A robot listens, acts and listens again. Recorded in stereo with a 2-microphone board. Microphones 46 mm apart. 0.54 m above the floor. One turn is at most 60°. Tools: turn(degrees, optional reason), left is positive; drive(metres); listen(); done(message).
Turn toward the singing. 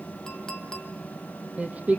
turn(degrees=-30, reason="The singing: about 30° right or 150° right.")
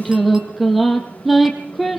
done("Found it: singing, straight ahead.")